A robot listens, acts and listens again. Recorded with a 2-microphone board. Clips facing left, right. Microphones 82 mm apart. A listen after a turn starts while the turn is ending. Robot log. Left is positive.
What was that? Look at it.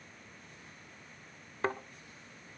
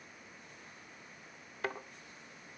note: The thud: about 35° left or 145° left.
cmd yaw +35
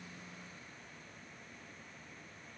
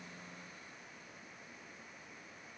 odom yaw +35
cmd idle
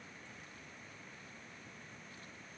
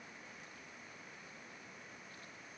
end: I heard a thud, but can't make it out now. It was about straight ahead or 110° left.